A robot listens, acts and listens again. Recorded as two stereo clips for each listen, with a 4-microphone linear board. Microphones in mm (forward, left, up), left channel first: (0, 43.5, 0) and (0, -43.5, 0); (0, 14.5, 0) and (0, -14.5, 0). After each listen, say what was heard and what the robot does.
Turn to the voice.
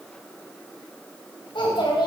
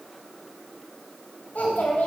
The child speaking: about 70° left or 110° left. Turn 70° left.
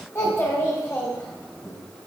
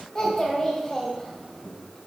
So it is at 20° left. Turn 20° left.
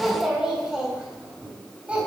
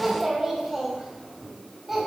The child speaking is now 10° right. Turn 10° right.
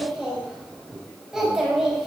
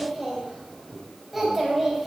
Facing the child speaking, 2 to 4 m away.